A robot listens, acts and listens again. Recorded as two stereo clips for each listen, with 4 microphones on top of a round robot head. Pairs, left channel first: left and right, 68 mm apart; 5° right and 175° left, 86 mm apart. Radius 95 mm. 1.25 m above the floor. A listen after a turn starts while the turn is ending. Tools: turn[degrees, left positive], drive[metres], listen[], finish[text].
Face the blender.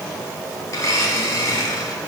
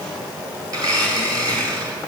Thought: The blender: 130° left.
Action: turn[130]
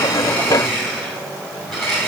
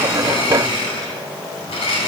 Action: finish[Found it: a blender, straight ahead.]